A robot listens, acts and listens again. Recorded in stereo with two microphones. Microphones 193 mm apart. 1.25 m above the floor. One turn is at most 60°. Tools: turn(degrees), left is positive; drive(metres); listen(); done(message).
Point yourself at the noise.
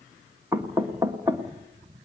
turn(degrees=-15)
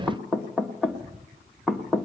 done("Facing the knocking.")